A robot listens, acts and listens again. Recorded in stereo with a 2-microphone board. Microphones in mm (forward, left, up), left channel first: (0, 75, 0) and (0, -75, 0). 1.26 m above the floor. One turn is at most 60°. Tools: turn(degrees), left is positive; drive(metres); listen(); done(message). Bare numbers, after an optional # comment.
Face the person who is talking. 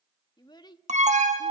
# The child speaking: about 30° left or 150° left.
turn(30)
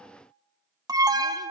listen()
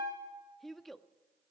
done("Found it: a child speaking, straight ahead, 1 to 2 m away.")